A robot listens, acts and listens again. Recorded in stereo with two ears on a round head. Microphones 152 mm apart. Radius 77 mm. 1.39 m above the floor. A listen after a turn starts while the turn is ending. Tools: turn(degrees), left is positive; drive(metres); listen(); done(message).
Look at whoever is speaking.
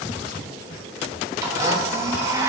listen()
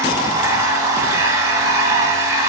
listen()
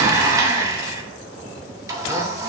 done("I can't make out anyone speaking, only a blender.")